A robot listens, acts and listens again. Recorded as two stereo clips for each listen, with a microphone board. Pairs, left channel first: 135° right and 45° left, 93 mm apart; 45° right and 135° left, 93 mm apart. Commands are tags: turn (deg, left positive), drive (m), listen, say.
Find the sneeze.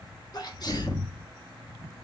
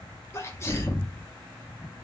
<turn deg="-100"/>
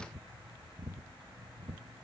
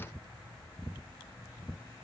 <say>I heard a sneeze from this way, but can't make it out now.</say>